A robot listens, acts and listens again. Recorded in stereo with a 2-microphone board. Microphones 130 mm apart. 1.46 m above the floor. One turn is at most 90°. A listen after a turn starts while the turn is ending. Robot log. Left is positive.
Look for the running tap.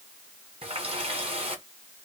note: The running tap: about 50° right or 130° right.
cmd yaw -50
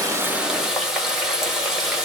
end: Found it: a running tap, straight ahead.